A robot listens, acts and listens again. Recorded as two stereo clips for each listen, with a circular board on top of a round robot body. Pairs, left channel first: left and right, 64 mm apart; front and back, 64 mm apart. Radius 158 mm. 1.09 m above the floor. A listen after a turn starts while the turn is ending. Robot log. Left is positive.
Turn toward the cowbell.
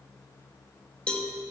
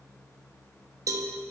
note: The cowbell: 160° left.
cmd yaw +160
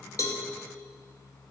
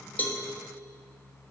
cmd idle
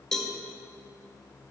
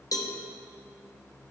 note: The cowbell is now 10° left.
cmd yaw +10
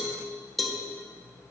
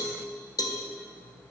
end: Found it: a cowbell, straight ahead, 1 to 2 m away.